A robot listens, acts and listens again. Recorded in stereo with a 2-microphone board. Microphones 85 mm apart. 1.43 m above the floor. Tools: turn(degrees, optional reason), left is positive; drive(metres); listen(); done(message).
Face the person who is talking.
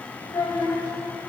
turn(degrees=60, reason="The child speaking: about 60° left or 120° left.")
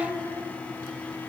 listen()
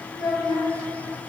done("Facing the child speaking.")